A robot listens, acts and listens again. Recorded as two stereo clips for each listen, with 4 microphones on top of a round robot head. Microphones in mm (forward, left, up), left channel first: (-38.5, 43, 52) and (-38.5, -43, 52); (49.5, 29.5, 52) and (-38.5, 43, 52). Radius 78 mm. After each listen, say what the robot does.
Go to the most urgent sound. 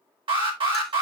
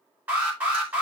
Turn 115° right.
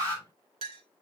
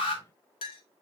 Turn 15° left.
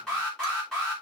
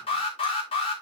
Drive 1.0 m forward.
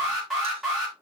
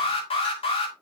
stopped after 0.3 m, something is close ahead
Something is in my way. I am facing the alarm but have not reached it.